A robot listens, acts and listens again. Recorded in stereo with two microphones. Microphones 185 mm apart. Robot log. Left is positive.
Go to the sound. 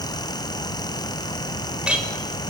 cmd yaw -30
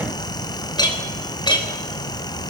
note: So it is at 25° left.
cmd yaw +25
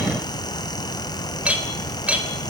cmd fwd 1.0
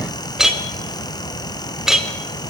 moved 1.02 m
cmd fwd 1.0
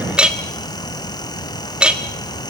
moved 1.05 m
cmd fwd 1.0
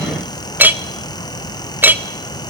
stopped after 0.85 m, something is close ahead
note: The clink is now 10° right.
cmd yaw -10
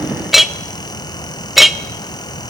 end: I am next to the clink.